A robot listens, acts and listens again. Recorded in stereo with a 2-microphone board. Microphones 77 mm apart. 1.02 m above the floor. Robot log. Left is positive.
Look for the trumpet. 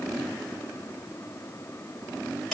cmd idle
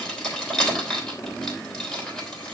cmd idle
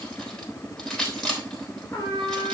note: The trumpet: about 60° left or 120° left.
cmd yaw +60
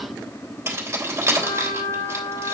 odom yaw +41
note: So it is at 75° left.
cmd yaw +75
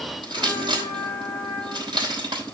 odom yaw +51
note: The trumpet is now 25° left.
cmd yaw +25
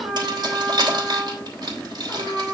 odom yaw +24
end: Found it: a trumpet, straight ahead.